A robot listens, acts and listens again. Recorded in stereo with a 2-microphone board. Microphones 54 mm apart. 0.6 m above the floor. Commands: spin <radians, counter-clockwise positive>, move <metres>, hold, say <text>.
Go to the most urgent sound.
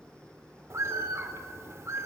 hold
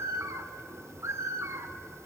hold
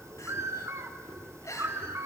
spin 1.57
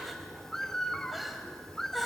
move 1.0
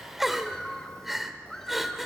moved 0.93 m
move 1.0
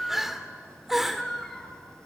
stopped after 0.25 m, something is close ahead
say Arrived at the crying, straight ahead.